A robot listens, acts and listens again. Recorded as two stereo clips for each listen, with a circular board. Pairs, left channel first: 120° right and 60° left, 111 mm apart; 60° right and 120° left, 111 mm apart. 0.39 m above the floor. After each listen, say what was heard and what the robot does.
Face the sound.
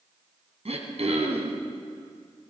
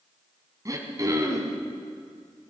The throat clearing: 65° left. Turn 65° left.
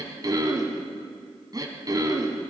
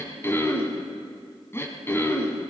The throat clearing is now 10° left. Turn 10° left.
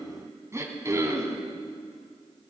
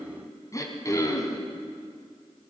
Facing the throat clearing.